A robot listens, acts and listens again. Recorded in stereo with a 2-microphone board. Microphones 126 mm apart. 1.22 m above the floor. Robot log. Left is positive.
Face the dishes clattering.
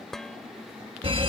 cmd yaw +30
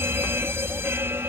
cmd idle
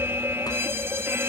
cmd idle
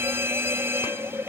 end: I heard dishes clattering, but can't make it out now. It was about 25° right or 145° left.